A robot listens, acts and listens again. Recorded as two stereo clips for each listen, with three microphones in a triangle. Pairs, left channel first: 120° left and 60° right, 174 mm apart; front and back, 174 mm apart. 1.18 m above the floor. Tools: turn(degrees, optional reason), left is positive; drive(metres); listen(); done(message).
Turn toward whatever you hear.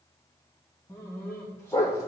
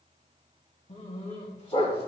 turn(degrees=50, reason="The dog barking: 50° left.")
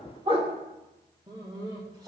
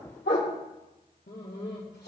done("Found it: a dog barking, straight ahead.")